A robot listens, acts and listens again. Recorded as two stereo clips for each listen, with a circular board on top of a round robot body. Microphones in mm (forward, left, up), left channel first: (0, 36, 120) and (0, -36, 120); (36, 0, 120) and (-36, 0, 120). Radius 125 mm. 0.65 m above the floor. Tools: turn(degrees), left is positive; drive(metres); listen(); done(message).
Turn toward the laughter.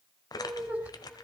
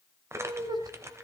turn(degrees=-160)
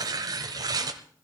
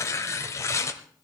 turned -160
listen()
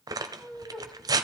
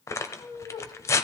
done("Facing the laughter.")